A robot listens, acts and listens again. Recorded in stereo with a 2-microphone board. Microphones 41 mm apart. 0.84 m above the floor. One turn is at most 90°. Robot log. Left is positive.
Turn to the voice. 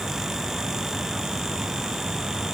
cmd idle
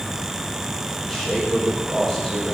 cmd yaw +30
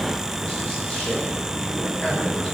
note: So it is at 150° left.
cmd yaw +90
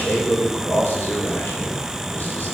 note: The man speaking is now 55° left.
cmd yaw +55
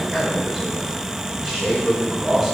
end: Facing the man speaking, over 4 m away.